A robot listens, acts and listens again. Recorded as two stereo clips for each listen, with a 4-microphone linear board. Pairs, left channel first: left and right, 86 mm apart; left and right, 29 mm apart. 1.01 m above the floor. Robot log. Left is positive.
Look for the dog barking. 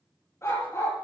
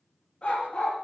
note: The dog barking: about 30° left or 150° left.
cmd yaw +30
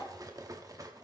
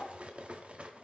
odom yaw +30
cmd idle
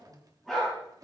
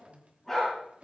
end: Facing the dog barking, over 4 m away.